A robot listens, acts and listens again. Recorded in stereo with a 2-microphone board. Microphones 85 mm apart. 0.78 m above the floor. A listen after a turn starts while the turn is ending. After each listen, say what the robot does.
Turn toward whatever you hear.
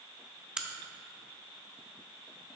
Turn 30° right.
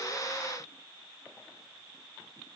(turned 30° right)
Keep listening.
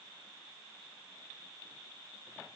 I heard a crack, but can't make it out now. It was about 20° left or 140° right.